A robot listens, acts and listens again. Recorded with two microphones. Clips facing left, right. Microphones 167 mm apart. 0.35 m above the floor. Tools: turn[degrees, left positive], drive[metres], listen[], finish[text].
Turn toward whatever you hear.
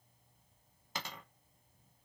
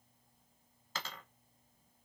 Thought: The dropped coin: about 20° left or 160° left.
Action: turn[20]
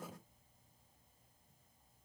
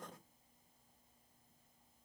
Action: listen[]
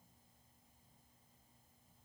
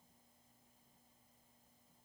Action: finish[I heard a dropped coin, but can't make it out now. It was about straight ahead or 140° left.]